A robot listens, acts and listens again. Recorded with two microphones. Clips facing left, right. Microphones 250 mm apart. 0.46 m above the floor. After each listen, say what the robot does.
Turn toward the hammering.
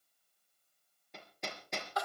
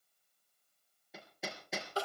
Turn 30° right.
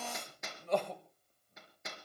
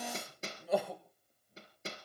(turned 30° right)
Turn 150° right.
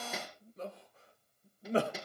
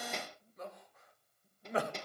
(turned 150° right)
Found it: hammering, straight ahead.